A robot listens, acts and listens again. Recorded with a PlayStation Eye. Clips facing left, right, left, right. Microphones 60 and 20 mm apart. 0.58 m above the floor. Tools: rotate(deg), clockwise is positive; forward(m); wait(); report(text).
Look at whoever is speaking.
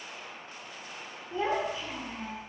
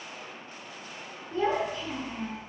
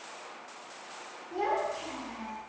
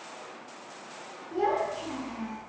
rotate(-30)
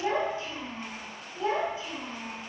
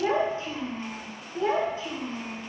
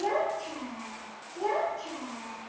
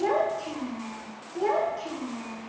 rotate(55)
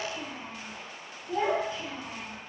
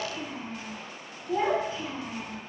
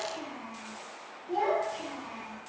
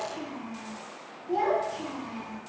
rotate(15)
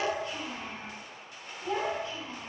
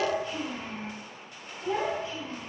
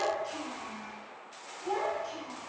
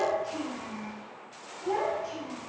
report("Found it: a child speaking, straight ahead, 2 to 4 m away.")